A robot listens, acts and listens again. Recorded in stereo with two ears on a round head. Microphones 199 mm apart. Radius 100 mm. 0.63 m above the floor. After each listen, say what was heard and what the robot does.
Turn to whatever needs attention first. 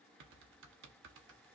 Keep listening.
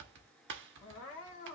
The crying: about 60° left or 120° left. Turn 60° left.
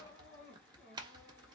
So it is at 55° left. Turn 55° left.
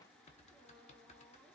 Keep listening.
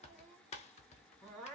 Facing the crying.